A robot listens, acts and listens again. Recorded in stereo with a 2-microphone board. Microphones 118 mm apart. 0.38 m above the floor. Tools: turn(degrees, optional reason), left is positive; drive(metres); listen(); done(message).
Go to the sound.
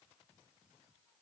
listen()
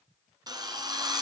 turn(degrees=-35, reason="The drill: about 35° right or 145° right.")
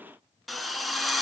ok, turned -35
drive(metres=1.0)
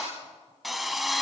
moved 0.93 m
drive(metres=1.0)
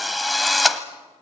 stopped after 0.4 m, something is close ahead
done("I am next to the drill.")